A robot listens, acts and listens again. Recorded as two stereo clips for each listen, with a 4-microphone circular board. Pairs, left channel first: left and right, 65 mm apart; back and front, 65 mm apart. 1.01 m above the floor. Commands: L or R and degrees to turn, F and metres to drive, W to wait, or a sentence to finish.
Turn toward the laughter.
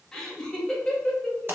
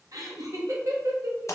L15
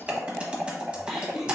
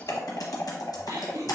Found it: laughter, straight ahead.